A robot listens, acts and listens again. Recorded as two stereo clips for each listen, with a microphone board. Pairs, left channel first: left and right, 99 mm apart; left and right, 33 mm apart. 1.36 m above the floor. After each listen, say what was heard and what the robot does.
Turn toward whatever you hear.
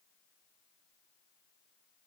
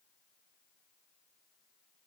Keep listening.
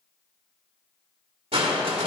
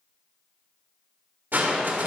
Turn 90° right.
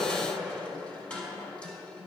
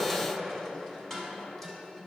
So it is at 10° left. Turn 10° left.
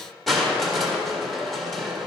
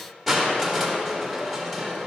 Facing the crushing.